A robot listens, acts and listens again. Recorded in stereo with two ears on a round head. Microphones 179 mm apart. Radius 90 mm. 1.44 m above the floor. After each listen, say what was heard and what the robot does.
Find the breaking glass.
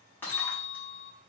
Turn 30° left.
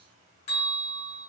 Keep listening.
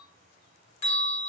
I heard breaking glass, but can't make it out now. It was about 20° right or 140° left.